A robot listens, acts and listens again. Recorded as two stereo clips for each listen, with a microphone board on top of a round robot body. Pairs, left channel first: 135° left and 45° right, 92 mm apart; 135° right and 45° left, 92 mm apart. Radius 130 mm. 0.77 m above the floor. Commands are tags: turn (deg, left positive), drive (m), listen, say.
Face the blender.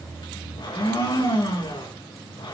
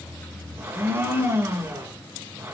<turn deg="105"/>
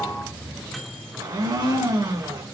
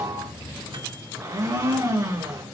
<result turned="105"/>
<say>Facing the blender.</say>